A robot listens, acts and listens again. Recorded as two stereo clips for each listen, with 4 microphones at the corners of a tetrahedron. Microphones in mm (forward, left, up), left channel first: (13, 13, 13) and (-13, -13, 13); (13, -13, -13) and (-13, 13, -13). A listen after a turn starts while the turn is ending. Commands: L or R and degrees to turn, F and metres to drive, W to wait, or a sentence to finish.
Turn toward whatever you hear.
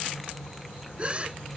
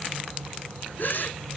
R75
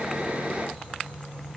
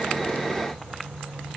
I heard a gasp from this way, but can't make it out now.